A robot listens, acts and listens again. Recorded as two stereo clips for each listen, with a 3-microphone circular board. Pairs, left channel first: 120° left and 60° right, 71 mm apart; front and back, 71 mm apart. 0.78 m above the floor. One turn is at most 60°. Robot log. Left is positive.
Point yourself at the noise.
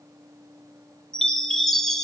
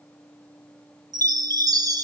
note: The chime: 155° right.
cmd yaw -60
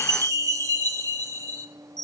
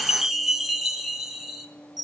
note: The chime is now 95° right.
cmd yaw -60
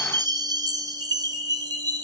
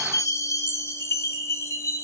note: The chime is now 45° right.
cmd yaw -45
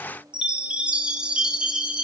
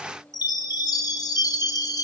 note: The chime is now 15° left.
cmd yaw +15
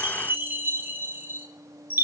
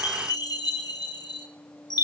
end: Found it: a chime, straight ahead, under 1 m away.